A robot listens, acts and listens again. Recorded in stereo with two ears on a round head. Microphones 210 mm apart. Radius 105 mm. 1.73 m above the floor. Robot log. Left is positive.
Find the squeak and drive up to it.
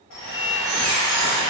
cmd yaw +30
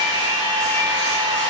cmd idle
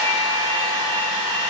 cmd idle
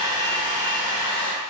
end: I heard a squeak, but can't make it out now. It was about 30° right or 150° left. I did not reach it.